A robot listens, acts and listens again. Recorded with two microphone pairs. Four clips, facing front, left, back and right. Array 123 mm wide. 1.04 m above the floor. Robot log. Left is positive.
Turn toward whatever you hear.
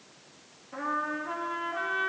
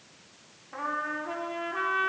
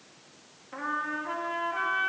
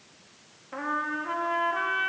note: The trumpet: 110° right.
cmd yaw -110
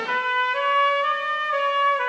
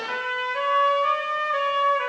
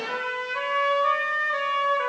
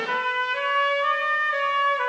note: The trumpet is now 20° right.
cmd yaw -20
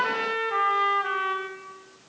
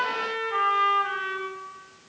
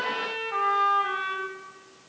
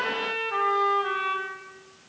end: Facing the trumpet, 1 to 2 m away.